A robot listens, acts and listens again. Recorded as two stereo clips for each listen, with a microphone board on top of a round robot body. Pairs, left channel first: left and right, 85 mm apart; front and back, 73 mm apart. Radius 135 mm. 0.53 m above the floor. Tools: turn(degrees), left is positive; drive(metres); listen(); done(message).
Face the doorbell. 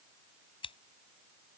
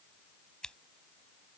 listen()
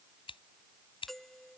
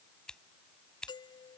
done("Found it: a doorbell, straight ahead.")